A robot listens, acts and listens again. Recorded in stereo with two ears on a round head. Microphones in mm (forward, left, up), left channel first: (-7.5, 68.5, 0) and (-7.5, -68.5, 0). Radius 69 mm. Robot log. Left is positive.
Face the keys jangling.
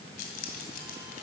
note: The keys jangling: about 65° left or 115° left.
cmd yaw +65
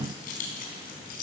note: So it is at 65° left.
cmd yaw +65
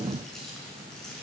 end: Facing the keys jangling.